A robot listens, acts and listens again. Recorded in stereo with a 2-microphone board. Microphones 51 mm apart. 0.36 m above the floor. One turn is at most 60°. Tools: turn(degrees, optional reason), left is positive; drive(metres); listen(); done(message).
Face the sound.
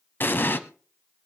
turn(degrees=45, reason="The explosion: about 45° left or 135° left.")
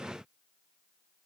listen()
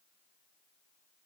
done("I heard an explosion, but can't make it out now. It was about straight ahead or 90° left.")